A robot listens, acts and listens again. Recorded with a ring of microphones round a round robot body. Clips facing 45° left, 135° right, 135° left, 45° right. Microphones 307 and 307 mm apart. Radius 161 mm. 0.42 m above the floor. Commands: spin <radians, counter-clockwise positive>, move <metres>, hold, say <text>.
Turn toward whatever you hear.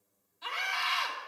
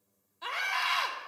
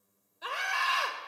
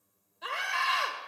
spin -2.44
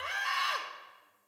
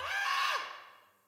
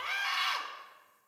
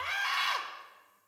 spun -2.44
spin -0.87
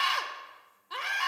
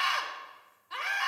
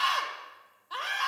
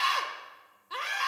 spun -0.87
spin 0.17
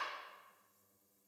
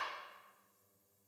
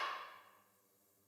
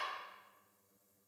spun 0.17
hold
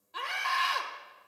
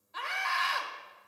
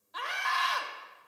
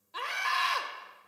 say Found it: a scream, straight ahead, 1 to 2 m away.